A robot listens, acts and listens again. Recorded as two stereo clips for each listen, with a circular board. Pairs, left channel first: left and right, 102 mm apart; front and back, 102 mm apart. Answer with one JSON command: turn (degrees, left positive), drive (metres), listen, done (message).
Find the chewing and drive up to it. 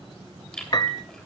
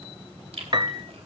{"turn": 175}
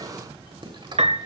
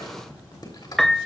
{"turn": -50}
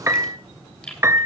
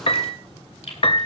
{"turn": 10}
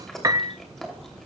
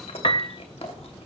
{"drive": 1.0}
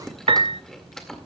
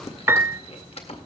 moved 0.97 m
{"drive": 1.0}
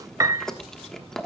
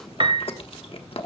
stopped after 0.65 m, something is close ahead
{"done": "I am next to the chewing."}